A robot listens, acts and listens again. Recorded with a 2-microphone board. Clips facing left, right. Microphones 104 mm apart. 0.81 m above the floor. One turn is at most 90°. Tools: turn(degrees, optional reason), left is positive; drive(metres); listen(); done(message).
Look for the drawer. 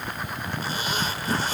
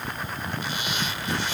listen()
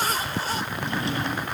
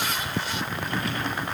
turn(degrees=30, reason="The drawer: about 30° left or 150° left.")
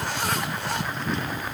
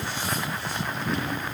listen()
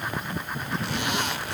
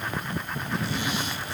listen()
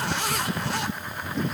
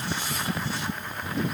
done("I heard a drawer, but can't make it out now. It was about straight ahead or 120° left.")